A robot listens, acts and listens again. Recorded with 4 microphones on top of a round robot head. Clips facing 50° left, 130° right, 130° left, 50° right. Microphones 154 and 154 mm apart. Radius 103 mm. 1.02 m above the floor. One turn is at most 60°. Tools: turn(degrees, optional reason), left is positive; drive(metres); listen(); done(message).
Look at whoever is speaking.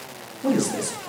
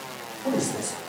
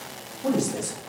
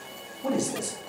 turn(degrees=30, reason="The man speaking: 30° left.")
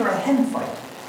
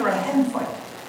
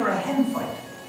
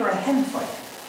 turn(degrees=-15, reason="The man speaking is now 15° right.")
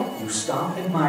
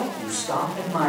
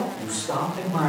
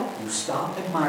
turn(degrees=-10, reason="The man speaking is now 10° right.")
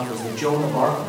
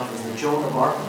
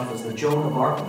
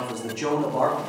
turn(degrees=-10, reason="The man speaking is now 10° right.")
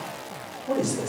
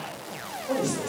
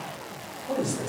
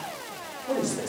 done("Facing the man speaking, 2 to 4 m away.")